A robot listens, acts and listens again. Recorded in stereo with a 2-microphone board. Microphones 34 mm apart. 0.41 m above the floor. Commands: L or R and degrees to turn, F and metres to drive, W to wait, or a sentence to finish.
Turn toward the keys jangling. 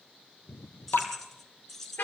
L30
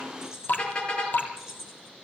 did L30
R15
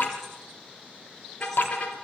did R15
W
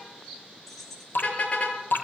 Found it: keys jangling, straight ahead, over 4 m away.